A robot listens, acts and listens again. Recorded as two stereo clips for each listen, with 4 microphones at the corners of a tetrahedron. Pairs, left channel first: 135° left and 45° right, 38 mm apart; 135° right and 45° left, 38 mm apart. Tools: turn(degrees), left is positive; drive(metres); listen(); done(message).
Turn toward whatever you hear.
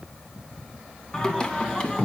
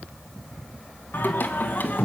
turn(degrees=-170)
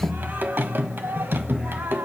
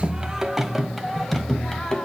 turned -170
turn(degrees=-60)
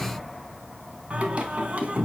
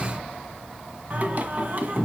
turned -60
done("Found it: singing, straight ahead, 1 to 2 m away.")